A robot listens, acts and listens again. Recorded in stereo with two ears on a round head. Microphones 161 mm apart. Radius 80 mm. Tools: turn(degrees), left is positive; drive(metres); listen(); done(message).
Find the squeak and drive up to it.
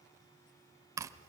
listen()
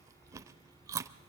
listen()
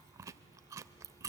done("I can't make out a squeak, only chewing.")